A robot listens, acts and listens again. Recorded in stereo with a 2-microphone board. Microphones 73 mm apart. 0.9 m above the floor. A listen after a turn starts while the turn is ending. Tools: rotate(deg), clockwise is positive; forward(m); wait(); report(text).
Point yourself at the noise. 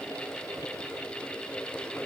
wait()
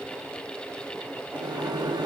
rotate(90)
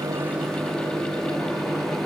report("Facing the microwave, 1 to 2 m away.")